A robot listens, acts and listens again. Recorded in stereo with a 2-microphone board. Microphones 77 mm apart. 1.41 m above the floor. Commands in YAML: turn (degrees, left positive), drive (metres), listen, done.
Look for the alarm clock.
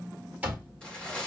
turn: -20
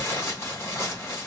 listen: true
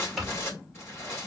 done: "Found it: an alarm clock, straight ahead."